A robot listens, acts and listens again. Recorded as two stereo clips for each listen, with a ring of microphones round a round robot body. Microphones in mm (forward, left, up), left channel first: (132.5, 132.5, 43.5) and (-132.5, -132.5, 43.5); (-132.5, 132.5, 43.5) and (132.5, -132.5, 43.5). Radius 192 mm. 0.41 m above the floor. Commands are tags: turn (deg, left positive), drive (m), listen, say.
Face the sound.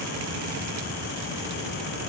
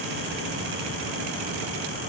<listen/>
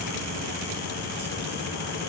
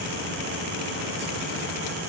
<listen/>
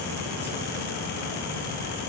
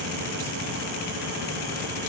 <say>I can't make out anything to turn to.</say>